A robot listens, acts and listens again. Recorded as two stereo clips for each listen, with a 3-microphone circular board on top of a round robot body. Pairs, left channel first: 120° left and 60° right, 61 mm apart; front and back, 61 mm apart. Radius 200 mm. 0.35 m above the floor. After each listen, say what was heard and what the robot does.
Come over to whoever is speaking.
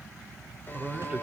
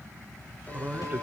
The man speaking: 125° right. Turn 125° right.
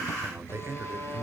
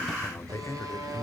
The man speaking is now 20° right. Turn 20° right.
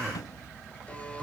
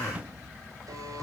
Keep listening.
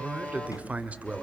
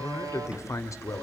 Drive 1.0 m forward.
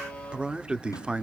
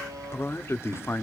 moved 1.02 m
The man speaking is now 10° left. Turn 10° left.
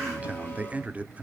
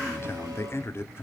Drive 1.0 m forward.
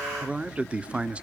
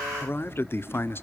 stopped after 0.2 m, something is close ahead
I am next to the man speaking.